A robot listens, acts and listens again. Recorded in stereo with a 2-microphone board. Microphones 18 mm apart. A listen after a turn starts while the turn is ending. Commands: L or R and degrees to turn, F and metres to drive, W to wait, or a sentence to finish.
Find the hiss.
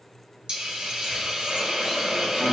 R65
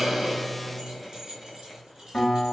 W
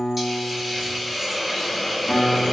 R10
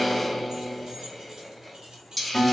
Found it: a hiss, straight ahead.